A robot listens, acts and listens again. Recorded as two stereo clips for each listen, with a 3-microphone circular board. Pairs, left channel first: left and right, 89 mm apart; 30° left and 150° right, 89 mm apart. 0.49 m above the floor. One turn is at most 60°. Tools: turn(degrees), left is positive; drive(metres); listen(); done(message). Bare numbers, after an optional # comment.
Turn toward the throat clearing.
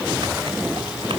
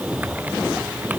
listen()
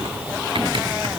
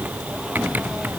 listen()
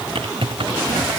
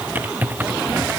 done("I can't make out throat clearing, only typing on a keyboard.")